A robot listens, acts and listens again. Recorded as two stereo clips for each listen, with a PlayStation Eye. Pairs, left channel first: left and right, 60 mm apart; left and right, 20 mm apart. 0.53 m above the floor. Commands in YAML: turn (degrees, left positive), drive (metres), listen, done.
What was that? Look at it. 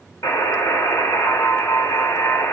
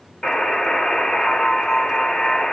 turn: 65
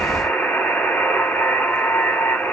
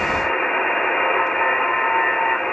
turn: 35
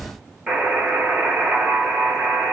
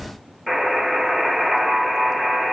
turn: -20
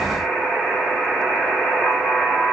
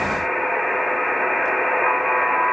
done: "Facing the buzzer."